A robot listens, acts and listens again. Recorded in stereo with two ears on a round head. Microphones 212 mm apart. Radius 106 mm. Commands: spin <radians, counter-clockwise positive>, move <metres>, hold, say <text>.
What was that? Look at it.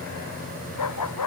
spin 1.57
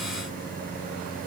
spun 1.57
hold
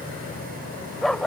say Found it: a dog barking, straight ahead.